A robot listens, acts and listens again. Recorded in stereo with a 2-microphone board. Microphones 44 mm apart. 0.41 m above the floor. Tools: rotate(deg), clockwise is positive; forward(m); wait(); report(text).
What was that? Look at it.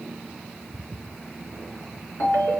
rotate(-90)
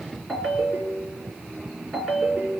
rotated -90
rotate(-15)
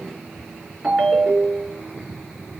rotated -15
report("Found it: a ringtone, straight ahead.")